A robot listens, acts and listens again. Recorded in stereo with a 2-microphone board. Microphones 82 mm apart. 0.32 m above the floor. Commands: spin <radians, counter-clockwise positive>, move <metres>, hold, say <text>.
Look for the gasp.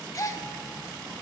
spin 0.79
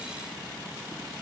hold
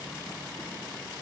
say I heard a gasp, but can't make it out now. It was about straight ahead or 90° left.